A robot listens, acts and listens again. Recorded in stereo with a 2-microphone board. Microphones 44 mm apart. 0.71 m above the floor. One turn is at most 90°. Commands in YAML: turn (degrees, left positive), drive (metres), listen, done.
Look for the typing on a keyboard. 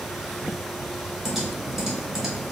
turn: -30
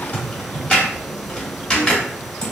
turn: 20
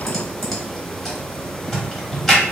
done: "Facing the typing on a keyboard, 1 to 2 m away."